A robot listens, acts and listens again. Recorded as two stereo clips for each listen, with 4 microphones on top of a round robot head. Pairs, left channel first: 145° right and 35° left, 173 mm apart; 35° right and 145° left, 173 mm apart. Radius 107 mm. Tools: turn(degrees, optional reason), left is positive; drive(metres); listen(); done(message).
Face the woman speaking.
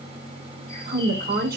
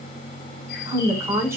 turn(degrees=70, reason="The woman speaking: 70° left.")
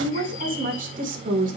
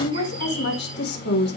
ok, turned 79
turn(degrees=-10, reason="The woman speaking is now 10° right.")
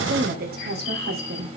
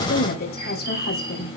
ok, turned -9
done("Found it: a woman speaking, straight ahead.")